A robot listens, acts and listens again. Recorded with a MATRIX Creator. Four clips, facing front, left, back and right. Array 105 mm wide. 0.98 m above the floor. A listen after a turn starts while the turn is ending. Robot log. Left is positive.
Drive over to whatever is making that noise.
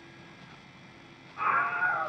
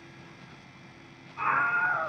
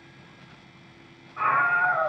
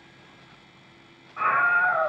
note: The scream: 120° right.
cmd yaw -120
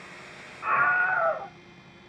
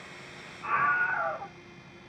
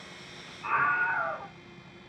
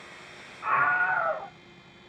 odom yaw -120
note: The scream is now 30° right.
cmd yaw -30
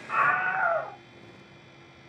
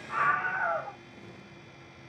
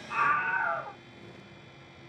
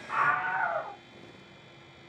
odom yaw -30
cmd fwd 1.0
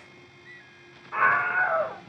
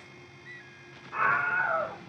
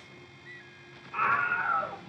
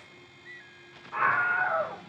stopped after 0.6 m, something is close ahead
end: Blocked. The scream is further on, straight ahead.